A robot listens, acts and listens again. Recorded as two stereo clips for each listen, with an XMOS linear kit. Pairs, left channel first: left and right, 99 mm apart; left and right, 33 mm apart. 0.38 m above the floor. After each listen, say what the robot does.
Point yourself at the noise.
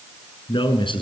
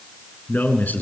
Turn 60° left.
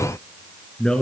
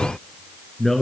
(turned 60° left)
Turn 10° left.
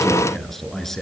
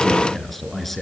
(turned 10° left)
Found it: a man speaking, straight ahead, over 4 m away.